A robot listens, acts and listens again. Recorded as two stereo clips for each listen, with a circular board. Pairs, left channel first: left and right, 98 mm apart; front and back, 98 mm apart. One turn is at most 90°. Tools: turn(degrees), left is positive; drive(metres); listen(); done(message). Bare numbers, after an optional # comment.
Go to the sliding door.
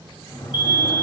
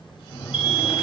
# The sliding door: 60° left.
turn(60)
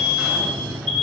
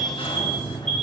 drive(1.0)
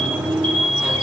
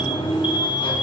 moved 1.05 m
# The sliding door is now 10° right.
turn(-10)
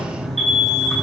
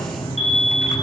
drive(1.0)
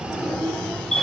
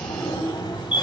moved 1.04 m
# The sliding door is now 10° left.
turn(10)
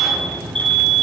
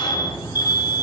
drive(1.0)
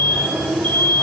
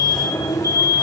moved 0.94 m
drive(1.0)
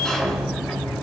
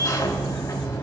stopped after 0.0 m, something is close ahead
# The sliding door is now 10° left.
turn(10)
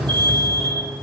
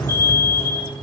done("Arrived at the sliding door, straight ahead.")